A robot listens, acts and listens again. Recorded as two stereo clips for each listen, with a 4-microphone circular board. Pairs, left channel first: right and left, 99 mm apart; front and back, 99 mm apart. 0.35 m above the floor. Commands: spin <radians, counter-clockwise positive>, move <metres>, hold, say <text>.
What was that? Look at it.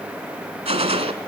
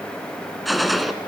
spin 1.57
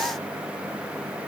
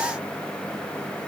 say Facing where the gunshot came from. I can't hear it now.